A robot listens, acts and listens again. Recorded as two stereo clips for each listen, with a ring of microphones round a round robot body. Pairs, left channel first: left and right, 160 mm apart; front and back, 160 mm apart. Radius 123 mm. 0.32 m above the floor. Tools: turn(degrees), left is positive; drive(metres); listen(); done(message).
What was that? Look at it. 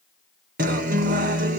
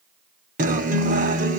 turn(degrees=-135)
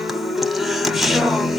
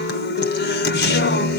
done("Found it: a guitar, straight ahead.")